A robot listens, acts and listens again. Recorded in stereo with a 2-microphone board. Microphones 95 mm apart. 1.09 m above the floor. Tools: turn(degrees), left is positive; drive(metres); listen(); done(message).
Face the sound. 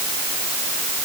listen()
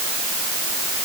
listen()
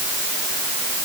done("I can't make out anything to turn to.")